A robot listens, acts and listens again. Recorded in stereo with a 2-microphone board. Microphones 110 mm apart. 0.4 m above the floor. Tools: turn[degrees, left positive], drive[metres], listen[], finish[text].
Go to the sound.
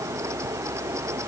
Action: listen[]
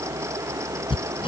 Thought: The hammering: about 55° left or 125° left.
Action: turn[55]
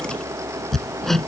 Action: drive[1.0]
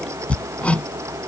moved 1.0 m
Thought: The hammering is now 15° left.
Action: turn[15]
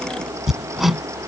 Action: drive[1.0]
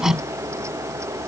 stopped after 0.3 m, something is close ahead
Action: finish[Blocked. The hammering is further on, straight ahead.]